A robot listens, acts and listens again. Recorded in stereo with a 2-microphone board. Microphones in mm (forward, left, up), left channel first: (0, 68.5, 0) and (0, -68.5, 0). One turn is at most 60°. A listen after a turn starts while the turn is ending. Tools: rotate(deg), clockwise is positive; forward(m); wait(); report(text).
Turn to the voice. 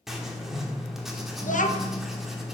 rotate(-60)
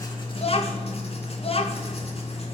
rotate(-45)
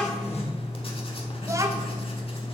wait()
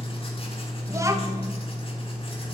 wait()
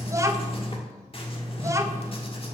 rotate(25)
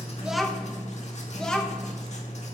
report("Facing the child speaking, 1 to 2 m away.")